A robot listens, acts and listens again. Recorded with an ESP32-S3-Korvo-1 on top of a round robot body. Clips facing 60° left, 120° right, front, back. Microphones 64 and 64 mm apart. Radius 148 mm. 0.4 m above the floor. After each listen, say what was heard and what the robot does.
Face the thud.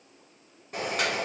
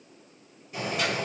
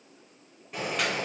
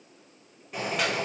Keep listening.
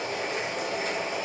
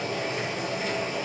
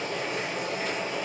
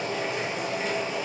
Keep listening.
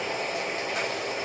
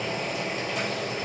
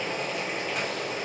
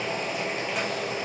I can't make out a thud to turn to.